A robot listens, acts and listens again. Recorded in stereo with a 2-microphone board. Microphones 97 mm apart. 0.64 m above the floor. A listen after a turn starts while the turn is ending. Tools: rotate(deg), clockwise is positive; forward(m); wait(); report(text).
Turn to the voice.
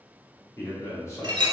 rotate(-35)
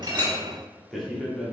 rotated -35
report("Facing the man speaking.")